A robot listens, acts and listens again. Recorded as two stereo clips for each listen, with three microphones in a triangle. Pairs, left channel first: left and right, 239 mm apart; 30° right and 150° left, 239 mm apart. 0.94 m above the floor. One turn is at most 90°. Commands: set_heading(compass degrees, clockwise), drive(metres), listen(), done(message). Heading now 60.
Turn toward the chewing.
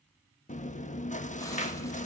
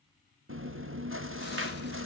set_heading(330)
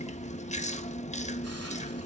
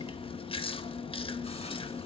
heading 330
set_heading(295)
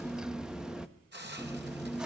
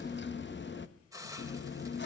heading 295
done("Facing the chewing.")